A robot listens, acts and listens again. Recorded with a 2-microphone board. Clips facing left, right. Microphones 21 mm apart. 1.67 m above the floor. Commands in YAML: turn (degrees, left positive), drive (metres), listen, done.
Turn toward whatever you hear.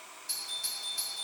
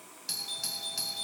turn: -60
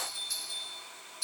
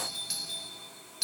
turn: -60
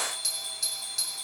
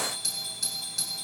done: "Found it: a doorbell, straight ahead, 2 to 4 m away."